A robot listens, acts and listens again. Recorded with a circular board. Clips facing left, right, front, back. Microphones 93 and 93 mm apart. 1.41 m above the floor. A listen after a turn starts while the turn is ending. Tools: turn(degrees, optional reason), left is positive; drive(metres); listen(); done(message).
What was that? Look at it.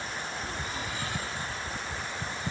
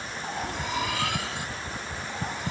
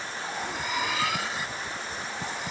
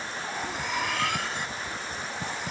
turn(degrees=-90, reason="The cutlery clinking: 90° right.")
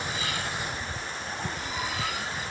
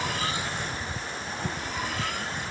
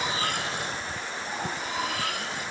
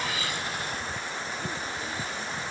done("Facing the cutlery clinking.")